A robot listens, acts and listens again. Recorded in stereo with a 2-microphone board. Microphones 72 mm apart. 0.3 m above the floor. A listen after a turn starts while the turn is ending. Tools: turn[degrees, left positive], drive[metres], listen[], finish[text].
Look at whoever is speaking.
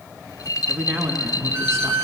Thought: The man speaking: about 40° right or 140° right.
Action: turn[-40]
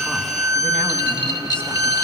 Action: listen[]
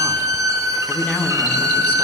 Thought: So it is at 25° left.
Action: turn[25]
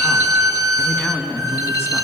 Thought: The man speaking is now 30° left.
Action: turn[30]
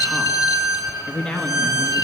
Thought: The man speaking is now 10° left.
Action: turn[10]
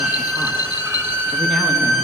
Action: listen[]
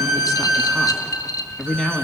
Action: finish[Found it: a man speaking, straight ahead, 2 to 4 m away.]